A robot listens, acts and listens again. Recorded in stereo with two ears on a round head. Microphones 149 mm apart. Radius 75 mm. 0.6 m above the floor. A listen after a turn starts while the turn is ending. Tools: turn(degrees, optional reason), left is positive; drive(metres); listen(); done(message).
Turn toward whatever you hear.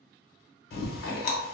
turn(degrees=60, reason="The chewing: about 60° left or 120° left.")
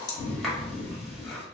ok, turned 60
done("Found it: chewing, straight ahead, under 1 m away.")